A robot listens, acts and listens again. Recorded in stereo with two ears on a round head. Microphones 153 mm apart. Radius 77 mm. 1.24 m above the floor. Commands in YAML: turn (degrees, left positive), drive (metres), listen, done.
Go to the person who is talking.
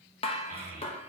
turn: -50
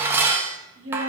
turn: -75
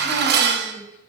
listen: true
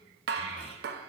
listen: true
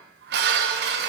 done: "Facing where the child speaking came from. I can't hear it now. I did not reach it."